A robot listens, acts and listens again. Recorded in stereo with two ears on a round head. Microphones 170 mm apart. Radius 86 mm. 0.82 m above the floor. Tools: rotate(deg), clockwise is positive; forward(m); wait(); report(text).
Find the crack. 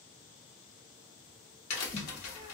rotate(-90)
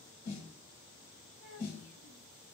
report("Facing where the crack came from. I can't hear it now.")